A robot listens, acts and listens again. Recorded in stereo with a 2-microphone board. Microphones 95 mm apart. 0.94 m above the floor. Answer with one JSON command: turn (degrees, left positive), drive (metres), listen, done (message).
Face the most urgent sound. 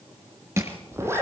{"listen": true}
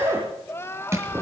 {"turn": 25}
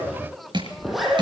{"done": "Facing the crying, 1 to 2 m away."}